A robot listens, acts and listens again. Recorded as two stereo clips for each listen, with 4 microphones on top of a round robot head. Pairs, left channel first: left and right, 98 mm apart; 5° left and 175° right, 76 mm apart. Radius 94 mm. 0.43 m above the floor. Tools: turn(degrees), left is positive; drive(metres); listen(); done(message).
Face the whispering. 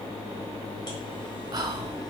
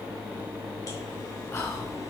turn(degrees=-45)
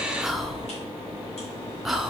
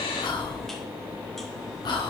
done("Found it: whispering, straight ahead.")